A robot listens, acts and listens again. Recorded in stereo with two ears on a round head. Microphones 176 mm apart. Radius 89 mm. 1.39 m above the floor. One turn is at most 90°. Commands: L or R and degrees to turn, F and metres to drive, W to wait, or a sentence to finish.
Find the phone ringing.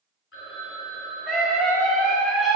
L75
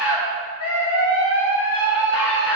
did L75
W
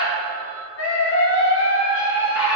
L30
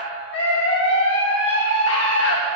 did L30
W
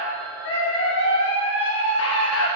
W
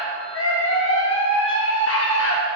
I heard a phone ringing from this way, but can't make it out now.